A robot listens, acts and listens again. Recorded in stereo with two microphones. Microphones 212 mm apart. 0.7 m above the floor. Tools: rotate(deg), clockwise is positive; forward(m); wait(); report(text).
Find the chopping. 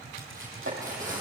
rotate(70)
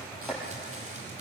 report("Facing the chopping, over 4 m away.")